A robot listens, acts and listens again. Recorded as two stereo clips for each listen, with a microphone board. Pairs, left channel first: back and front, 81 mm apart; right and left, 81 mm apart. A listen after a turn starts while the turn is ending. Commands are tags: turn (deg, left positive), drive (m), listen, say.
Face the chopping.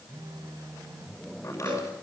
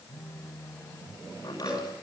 <turn deg="-125"/>
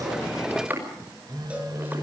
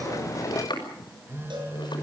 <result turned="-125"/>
<turn deg="-65"/>
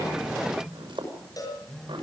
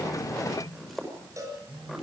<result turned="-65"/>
<say>Found it: chopping, straight ahead.</say>